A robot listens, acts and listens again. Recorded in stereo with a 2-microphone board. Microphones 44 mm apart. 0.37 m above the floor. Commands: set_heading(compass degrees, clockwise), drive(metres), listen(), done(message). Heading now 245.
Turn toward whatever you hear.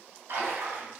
set_heading(335)
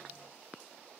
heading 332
done("Facing where the splash came from. I can't hear it now.")